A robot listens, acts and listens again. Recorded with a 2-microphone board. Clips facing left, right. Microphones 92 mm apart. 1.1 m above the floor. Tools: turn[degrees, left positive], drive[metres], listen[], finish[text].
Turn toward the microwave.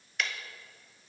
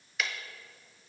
Action: listen[]
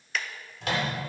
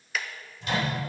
Action: turn[90]
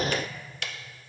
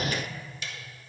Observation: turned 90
Action: listen[]
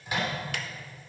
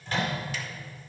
Thought: The microwave is now 10° left.
Action: turn[10]
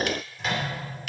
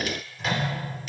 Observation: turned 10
Action: finish[Found it: a microwave, straight ahead.]